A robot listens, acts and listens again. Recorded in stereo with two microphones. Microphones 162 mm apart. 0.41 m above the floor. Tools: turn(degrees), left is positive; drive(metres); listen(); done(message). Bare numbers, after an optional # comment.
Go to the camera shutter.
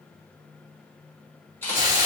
turn(30)
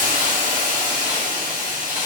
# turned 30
listen()
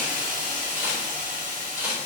# So it is at 15° right.
turn(-15)
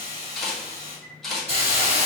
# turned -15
drive(1.0)
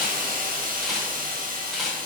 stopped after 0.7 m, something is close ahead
done("I am next to the camera shutter.")